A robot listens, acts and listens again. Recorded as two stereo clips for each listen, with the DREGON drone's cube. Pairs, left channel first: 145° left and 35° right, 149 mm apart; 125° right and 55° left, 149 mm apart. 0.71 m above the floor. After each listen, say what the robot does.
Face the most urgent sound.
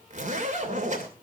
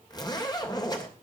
Keep listening.
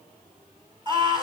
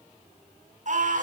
Turn 25° left.
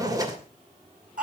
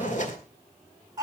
Turn 10° right.
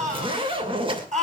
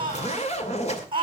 Found it: a scream, straight ahead, over 4 m away.